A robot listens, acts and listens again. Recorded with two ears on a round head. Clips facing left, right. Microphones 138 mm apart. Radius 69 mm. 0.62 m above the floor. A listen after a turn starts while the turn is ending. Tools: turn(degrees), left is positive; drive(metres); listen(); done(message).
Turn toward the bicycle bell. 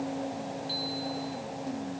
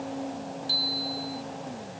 turn(degrees=-55)
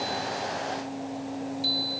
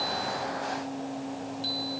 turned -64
turn(degrees=10)
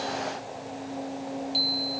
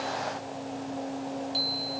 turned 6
done("Facing the bicycle bell.")